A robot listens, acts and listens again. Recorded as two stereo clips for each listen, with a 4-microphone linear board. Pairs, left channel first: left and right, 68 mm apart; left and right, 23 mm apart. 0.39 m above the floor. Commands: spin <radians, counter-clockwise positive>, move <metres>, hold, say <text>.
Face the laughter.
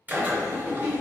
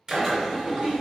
spin -0.61
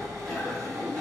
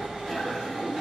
hold
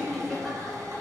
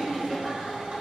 say Found it: laughter, straight ahead.